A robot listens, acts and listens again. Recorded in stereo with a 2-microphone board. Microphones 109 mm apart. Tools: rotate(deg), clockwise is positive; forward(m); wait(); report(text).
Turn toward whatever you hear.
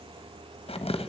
rotate(-60)
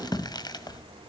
rotate(-45)
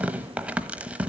rotate(10)
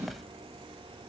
report("Found it: tearing paper, straight ahead.")